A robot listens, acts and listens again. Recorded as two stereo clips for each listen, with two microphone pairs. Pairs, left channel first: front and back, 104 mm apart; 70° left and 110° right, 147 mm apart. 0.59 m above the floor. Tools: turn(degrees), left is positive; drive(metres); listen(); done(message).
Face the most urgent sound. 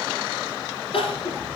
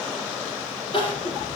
turn(degrees=20)
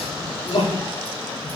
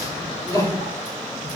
done("Facing the crying.")